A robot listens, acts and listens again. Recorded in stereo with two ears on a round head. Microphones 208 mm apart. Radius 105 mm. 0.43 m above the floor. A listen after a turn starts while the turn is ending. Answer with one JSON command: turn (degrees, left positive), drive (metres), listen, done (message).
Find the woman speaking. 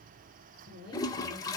{"turn": -45}
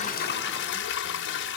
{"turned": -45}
{"listen": true}
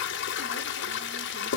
{"listen": true}
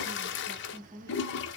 {"turn": -15}
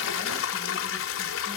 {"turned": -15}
{"listen": true}
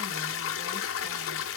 {"listen": true}
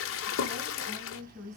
{"turn": -15}
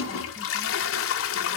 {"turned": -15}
{"listen": true}
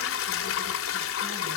{"listen": true}
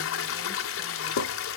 {"done": "Facing where the woman speaking came from. I can't hear it now."}